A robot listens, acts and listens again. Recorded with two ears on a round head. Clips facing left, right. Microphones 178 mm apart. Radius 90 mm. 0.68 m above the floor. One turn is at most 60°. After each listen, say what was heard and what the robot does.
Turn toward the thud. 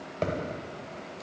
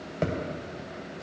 Turn 30° right.
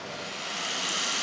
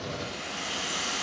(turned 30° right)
Keep listening.
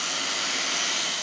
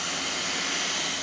I heard a thud, but can't make it out now. It was about 25° left or 145° right.